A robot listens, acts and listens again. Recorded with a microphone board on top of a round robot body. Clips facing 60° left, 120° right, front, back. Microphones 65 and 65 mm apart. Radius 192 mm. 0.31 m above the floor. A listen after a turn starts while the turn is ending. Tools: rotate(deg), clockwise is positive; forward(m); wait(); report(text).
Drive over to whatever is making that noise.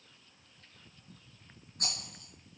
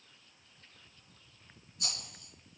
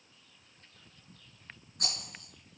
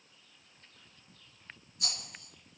rotate(-30)
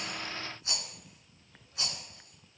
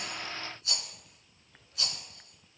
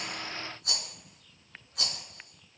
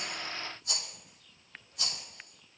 forward(1.0)
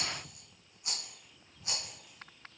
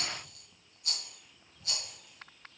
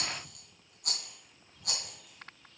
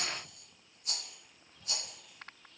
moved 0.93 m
forward(1.0)
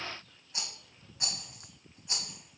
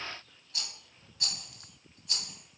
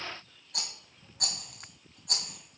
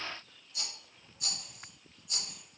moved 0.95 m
forward(1.0)
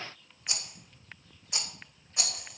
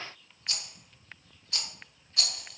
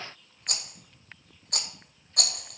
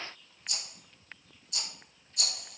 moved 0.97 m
rotate(10)
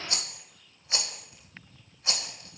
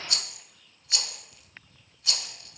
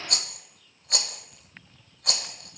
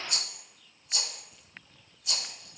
forward(1.0)
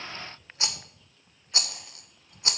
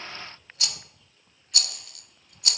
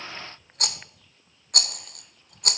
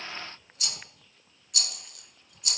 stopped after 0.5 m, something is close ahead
report("Arrived at the rattle, straight ahead.")